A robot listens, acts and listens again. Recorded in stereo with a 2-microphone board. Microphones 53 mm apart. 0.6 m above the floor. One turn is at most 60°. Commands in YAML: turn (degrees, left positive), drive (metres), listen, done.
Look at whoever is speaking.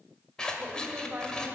turn: -35
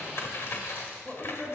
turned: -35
done: "Found it: a woman speaking, straight ahead."